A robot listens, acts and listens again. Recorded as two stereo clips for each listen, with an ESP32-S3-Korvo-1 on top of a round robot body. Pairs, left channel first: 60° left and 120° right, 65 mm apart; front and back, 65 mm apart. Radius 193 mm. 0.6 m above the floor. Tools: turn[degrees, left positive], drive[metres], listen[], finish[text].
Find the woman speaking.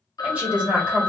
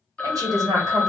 Thought: The woman speaking: 170° left.
Action: turn[170]
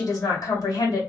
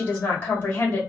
Thought: The woman speaking is now 55° left.
Action: turn[55]
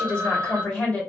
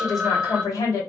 Thought: The woman speaking is now 10° right.
Action: turn[-10]
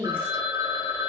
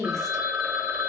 Action: finish[Found it: a woman speaking, straight ahead, 2 to 4 m away.]